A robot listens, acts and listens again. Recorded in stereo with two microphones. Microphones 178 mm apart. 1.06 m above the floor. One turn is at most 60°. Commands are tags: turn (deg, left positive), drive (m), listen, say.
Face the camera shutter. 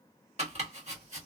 <listen/>
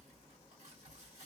<listen/>
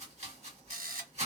<turn deg="-60"/>
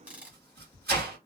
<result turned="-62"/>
<turn deg="-10"/>
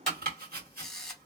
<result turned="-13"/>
<say>Facing the camera shutter.</say>